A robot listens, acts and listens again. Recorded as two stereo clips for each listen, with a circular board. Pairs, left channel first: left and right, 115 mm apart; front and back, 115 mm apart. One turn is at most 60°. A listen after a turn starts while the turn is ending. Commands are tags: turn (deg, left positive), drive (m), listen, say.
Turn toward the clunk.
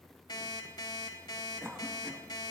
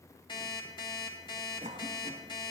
<listen/>
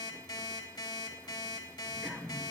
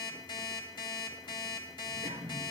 <listen/>
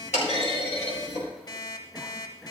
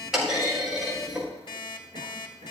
<turn deg="60"/>
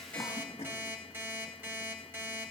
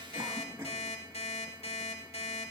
<turn deg="35"/>
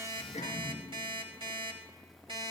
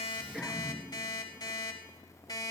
<say>Facing where the clunk came from. I can't hear it now.</say>